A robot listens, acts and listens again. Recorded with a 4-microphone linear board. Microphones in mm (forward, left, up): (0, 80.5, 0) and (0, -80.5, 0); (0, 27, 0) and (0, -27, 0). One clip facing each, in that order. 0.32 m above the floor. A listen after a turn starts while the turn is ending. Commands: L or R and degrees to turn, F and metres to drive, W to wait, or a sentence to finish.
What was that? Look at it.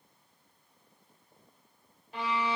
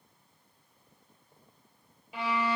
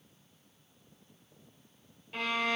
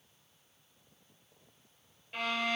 R30
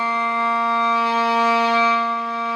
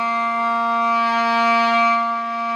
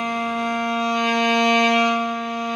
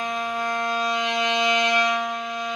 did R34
L25
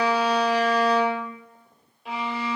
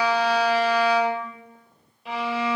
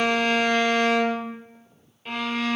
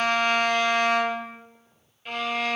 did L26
Found it: a violin, straight ahead, 1 to 2 m away.